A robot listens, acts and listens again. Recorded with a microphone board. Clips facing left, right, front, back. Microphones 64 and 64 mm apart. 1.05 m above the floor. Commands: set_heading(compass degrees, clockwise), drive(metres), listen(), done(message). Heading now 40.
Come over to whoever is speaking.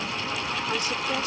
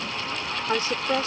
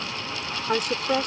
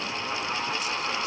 set_heading(75)
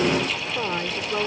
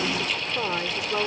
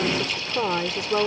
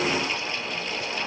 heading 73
drive(1.0)
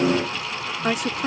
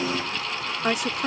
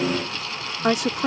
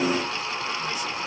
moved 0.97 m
drive(1.0)
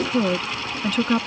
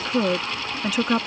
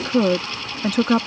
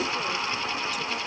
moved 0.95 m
set_heading(83)
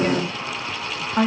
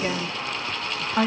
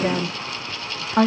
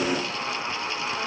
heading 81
drive(1.0)
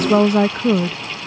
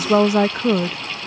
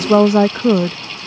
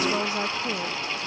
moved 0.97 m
drive(1.0)
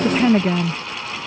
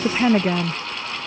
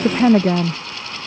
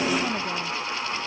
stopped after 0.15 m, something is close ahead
done("I am next to the woman speaking.")